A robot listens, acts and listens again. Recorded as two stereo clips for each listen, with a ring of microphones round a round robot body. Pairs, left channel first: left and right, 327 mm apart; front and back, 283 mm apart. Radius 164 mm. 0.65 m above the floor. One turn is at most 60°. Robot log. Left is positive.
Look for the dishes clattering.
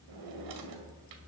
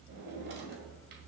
cmd idle
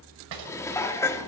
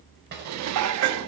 note: The dishes clattering: 170° left.
cmd yaw +60
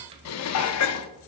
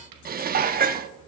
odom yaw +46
note: The dishes clattering is now 125° left.
cmd yaw +60
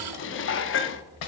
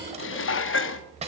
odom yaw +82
note: The dishes clattering is now 40° left.
cmd yaw +40
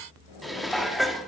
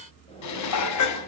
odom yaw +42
end: Found it: dishes clattering, straight ahead, under 1 m away.